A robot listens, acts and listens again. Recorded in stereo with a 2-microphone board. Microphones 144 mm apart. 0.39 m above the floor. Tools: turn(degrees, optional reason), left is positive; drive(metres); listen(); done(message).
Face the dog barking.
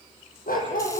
turn(degrees=90)
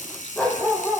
done("Facing the dog barking.")